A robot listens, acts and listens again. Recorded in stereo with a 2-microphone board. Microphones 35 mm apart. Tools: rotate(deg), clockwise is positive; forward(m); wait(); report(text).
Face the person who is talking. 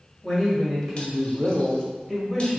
rotate(-30)
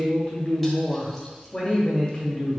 rotate(-145)
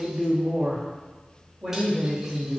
rotate(30)
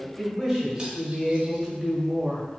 report("Facing the man speaking.")